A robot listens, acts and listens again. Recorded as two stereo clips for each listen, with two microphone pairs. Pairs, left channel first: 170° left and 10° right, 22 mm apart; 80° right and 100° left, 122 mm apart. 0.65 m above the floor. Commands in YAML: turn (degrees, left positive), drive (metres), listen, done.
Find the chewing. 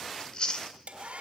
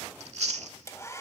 turn: 120
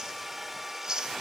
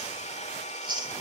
turn: 50
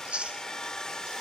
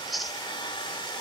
turn: 10
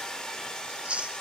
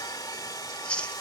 done: "Facing the chewing, 1 to 2 m away."